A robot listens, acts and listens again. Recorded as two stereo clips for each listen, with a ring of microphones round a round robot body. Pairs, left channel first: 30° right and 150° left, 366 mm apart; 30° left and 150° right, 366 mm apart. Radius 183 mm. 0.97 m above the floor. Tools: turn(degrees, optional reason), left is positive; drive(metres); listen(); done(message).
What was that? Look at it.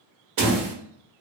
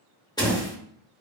turn(degrees=110, reason="The door slam: 110° left.")
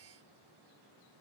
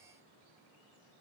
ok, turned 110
done("I heard a door slam from this way, but can't make it out now.")